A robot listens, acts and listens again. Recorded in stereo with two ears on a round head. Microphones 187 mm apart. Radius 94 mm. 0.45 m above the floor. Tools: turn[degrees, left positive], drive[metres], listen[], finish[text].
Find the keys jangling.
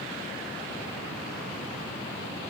Action: listen[]
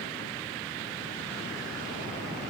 Action: listen[]
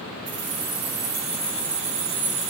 Thought: The keys jangling: about 65° right or 115° right.
Action: turn[-65]
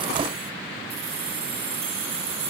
Thought: So it is at 50° right.
Action: turn[-50]
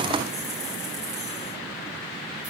Action: listen[]
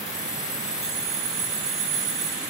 Action: finish[Facing the keys jangling.]